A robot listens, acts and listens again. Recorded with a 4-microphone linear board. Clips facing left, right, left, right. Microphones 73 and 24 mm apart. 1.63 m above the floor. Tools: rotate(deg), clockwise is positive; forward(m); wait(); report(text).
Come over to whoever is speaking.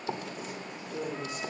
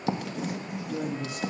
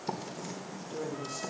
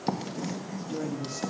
rotate(70)
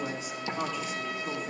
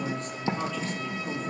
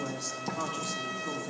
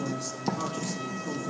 forward(1.0)
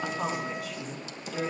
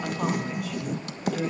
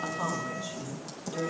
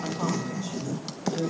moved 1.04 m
forward(1.0)
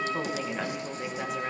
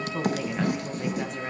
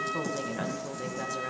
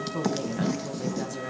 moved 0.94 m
forward(1.0)
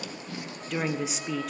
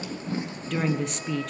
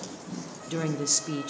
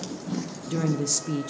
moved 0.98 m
forward(1.0)
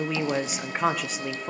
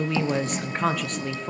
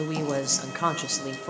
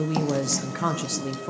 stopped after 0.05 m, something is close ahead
report("Arrived at the woman speaking, straight ahead.")